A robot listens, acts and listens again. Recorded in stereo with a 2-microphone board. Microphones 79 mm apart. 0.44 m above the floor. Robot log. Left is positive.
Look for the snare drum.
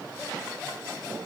cmd idle
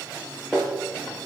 cmd yaw +30
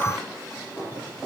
note: So it is at 140° left.
cmd yaw +140
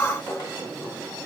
note: The snare drum is now 40° left.
cmd yaw +40
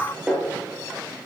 end: Facing the snare drum, over 4 m away.